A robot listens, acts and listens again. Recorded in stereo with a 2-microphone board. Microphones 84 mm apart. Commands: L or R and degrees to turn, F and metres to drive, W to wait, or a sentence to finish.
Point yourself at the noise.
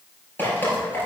L20
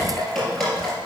Facing the dripping.